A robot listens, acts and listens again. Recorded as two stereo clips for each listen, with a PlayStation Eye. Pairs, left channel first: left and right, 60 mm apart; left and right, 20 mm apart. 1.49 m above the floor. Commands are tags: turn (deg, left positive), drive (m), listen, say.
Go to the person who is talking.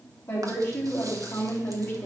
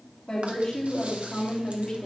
<turn deg="40"/>
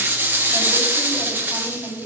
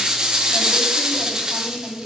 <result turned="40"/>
<drive m="1.0"/>
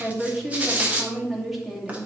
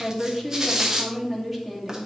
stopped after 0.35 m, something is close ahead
<say>Blocked. The woman speaking is further on, straight ahead.</say>